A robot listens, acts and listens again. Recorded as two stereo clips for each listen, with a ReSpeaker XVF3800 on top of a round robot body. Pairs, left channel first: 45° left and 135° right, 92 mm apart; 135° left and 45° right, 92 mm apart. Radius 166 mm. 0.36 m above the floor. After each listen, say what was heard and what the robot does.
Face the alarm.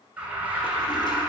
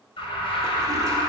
The alarm: 150° left. Turn 150° left.
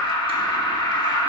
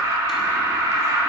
The alarm is now 10° left. Turn 10° left.
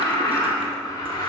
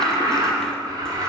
Found it: an alarm, straight ahead.